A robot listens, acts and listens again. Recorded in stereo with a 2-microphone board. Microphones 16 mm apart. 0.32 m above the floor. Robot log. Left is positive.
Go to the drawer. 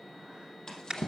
note: The drawer: about 45° left or 135° left.
cmd yaw +45
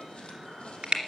cmd idle
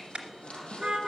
note: So it is at 90° left.
cmd yaw +90
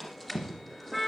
cmd fwd 1.0
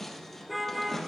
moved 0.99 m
note: The drawer is now 10° left.
cmd yaw +10
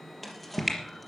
cmd fwd 1.0
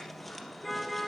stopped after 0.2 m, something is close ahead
cmd idle
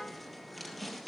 end: Blocked. The drawer is further on, straight ahead.